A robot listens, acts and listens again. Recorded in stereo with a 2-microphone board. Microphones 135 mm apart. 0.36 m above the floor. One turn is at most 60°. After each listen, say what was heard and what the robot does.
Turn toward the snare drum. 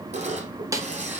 The snare drum: about 25° right or 155° right. Turn 25° right.
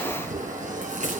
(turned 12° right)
Keep listening.
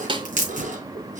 So it is at 145° right. Turn 60° right.
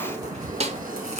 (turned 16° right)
The snare drum is now 130° right. Turn 60° right.
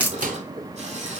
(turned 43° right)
Nothing new. It was at 85° right. Turn 60° right.
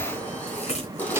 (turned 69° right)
Nothing new. It was at 15° right. Turn 15° right.
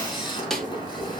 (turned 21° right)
Found it: a snare drum, straight ahead, 1 to 2 m away.